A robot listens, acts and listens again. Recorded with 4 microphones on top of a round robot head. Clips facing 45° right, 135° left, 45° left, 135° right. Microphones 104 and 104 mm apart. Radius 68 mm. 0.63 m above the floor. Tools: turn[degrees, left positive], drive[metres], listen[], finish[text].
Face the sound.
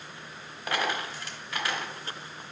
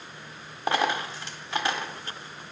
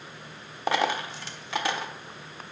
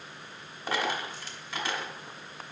Thought: The dropped coin: 70° left.
Action: turn[70]
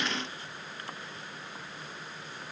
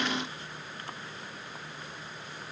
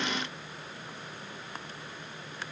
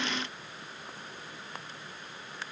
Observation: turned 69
Action: finish[Facing where the dropped coin came from. I can't hear it now.]